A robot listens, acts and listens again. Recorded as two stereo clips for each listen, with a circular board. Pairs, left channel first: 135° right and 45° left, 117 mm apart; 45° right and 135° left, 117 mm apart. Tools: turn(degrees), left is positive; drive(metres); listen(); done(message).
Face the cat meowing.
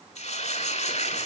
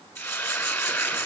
listen()
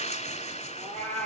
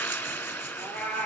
turn(degrees=35)
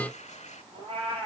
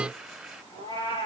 done("Found it: a cat meowing, straight ahead.")